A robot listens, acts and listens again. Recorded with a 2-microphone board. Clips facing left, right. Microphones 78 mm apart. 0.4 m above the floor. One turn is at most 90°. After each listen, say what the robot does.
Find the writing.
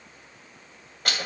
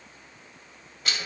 Keep listening.
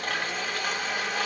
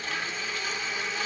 Keep listening.
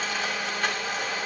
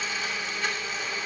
I can't make out writing, only a blender.